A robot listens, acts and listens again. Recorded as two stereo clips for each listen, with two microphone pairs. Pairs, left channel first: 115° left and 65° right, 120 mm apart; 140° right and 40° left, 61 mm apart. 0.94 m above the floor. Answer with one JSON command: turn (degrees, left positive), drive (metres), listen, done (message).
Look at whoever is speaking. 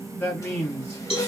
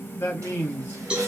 {"turn": -175}
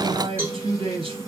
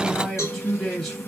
{"turn": -60}
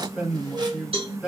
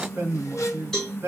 {"turn": 15}
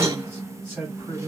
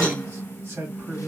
{"done": "Facing the man speaking, 1 to 2 m away."}